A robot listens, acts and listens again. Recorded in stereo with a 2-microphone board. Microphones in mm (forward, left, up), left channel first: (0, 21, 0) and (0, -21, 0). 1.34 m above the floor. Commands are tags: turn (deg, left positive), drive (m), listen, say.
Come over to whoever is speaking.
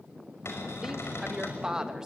<turn deg="-15"/>
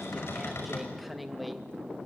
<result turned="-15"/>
<drive m="1.0"/>
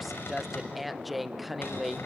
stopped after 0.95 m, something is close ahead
<say>Arrived at the woman speaking, straight ahead.</say>